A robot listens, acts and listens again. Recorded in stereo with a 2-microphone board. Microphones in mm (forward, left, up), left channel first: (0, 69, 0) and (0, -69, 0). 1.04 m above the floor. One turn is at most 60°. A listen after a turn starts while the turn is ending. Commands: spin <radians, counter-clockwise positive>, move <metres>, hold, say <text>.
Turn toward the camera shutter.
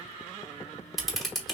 spin 0.52
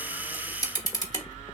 spin 1.05
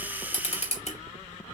spin 1.05
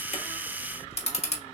spin 1.05
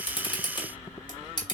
spin 0.61
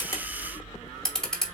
say Facing the camera shutter.